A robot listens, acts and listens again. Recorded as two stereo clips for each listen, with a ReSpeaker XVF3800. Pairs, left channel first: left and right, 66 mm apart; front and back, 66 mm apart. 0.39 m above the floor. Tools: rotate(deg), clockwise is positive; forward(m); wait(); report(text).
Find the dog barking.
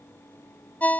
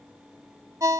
wait()
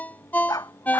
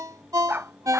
rotate(-120)
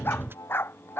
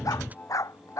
rotate(-35)
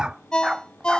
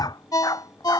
rotate(10)
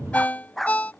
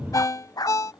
report("Found it: a dog barking, straight ahead.")